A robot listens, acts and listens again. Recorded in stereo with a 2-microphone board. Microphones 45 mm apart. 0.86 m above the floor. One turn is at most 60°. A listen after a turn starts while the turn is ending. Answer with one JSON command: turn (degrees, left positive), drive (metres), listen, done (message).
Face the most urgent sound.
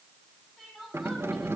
{"turn": 30}
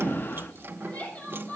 {"turn": 60}
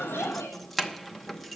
{"turn": 60}
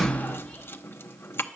{"turn": 25}
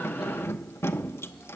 {"done": "Facing where the crying came from. I can't hear it now."}